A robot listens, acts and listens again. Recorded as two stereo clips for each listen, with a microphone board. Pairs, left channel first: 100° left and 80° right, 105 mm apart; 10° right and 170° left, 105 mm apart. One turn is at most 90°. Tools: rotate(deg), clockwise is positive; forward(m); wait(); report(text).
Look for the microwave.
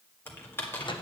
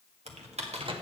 rotate(-90)
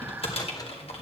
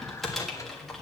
rotate(-50)
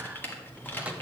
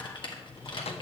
report("Facing the microwave.")